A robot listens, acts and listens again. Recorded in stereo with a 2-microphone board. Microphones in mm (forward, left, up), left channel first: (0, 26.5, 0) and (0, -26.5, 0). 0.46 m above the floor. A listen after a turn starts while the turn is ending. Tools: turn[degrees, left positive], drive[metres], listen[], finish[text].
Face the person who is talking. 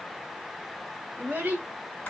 Thought: The child speaking: about 40° right or 140° right.
Action: turn[-40]
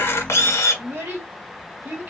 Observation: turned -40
Thought: So it is at 125° right.
Action: turn[-125]
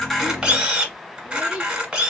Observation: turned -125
Thought: The child speaking is now 10° right.
Action: turn[-10]
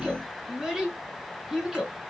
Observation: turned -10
Action: finish[Found it: a child speaking, straight ahead, 2 to 4 m away.]